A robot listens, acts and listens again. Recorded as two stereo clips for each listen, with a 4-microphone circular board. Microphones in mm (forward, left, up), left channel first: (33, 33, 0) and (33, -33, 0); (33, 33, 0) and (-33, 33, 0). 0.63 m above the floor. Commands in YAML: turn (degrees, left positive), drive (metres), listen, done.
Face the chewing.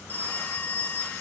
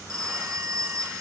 listen: true
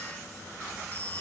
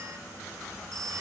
listen: true
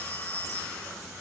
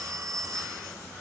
done: "I can't make out chewing, only a phone ringing."